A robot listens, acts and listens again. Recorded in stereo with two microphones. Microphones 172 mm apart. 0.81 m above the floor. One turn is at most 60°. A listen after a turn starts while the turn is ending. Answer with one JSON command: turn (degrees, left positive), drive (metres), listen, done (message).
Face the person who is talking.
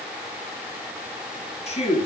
{"turn": 40}
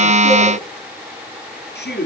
{"turn": 60}
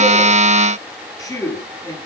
{"turn": 20}
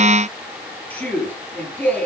{"turn": 10}
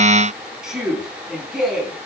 {"done": "Found it: a man speaking, straight ahead, over 4 m away."}